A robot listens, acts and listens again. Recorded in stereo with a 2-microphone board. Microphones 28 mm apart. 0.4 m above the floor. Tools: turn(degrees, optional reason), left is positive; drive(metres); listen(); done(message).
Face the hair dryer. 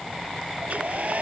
turn(degrees=-60, reason="The hair dryer: about 60° right or 120° right.")
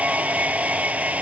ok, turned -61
turn(degrees=-60, reason="So it is at 60° right.")
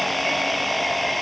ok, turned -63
done("Found it: a hair dryer, straight ahead.")